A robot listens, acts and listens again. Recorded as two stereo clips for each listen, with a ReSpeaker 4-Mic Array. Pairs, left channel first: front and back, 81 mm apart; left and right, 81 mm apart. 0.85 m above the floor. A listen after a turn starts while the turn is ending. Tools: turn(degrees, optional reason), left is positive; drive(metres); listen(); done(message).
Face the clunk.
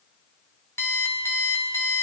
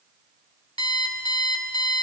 listen()
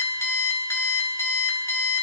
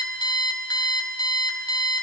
listen()
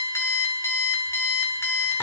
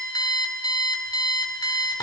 done("I can't make out a clunk, only an alarm clock.")